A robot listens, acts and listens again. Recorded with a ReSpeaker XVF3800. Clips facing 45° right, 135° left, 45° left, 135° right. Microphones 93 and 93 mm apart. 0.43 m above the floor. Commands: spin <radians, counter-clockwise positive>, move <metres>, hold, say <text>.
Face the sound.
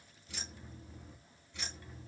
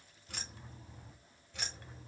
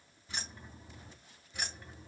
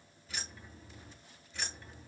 spin 2.27
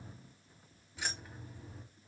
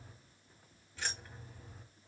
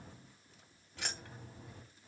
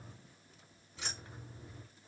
spin 0.70
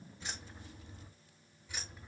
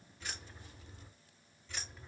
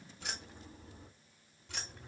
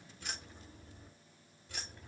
spin 0.70
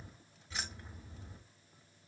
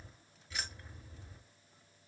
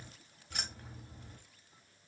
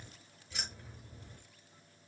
spin 0.26
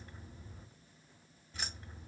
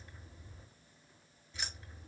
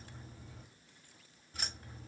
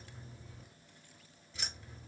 say Found it: keys jangling, straight ahead.